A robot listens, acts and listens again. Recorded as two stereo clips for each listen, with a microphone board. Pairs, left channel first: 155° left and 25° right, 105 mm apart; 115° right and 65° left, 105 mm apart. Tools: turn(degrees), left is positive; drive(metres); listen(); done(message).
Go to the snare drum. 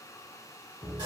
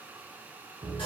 listen()
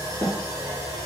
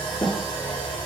turn(degrees=-120)
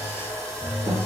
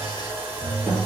listen()
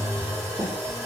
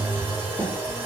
turn(degrees=-10)
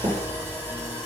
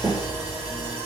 drive(metres=1.0)
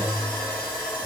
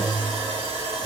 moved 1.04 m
listen()
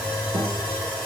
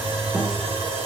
listen()
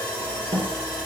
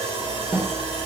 drive(metres=1.0)
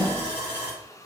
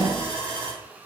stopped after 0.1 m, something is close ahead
done("I am next to the snare drum.")